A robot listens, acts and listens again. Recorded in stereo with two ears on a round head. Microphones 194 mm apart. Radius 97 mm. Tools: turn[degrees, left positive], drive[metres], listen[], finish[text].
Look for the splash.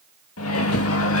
Action: listen[]
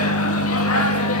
Action: listen[]
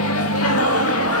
Action: finish[I can't make out a splash to turn to.]